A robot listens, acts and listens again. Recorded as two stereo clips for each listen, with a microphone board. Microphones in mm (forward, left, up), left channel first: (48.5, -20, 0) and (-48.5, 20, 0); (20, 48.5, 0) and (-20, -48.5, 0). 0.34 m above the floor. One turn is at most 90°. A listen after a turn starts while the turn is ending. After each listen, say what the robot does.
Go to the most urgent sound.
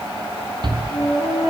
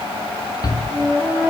Turn 90° left.
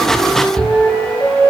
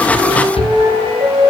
Turn 60° left.
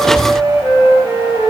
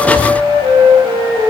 Keep listening.
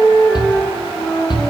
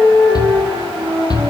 Turn 20° left.
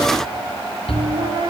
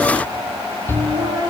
Drive 1.0 m forward.
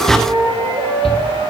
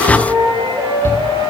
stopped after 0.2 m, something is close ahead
Blocked. The shout is further on, straight ahead.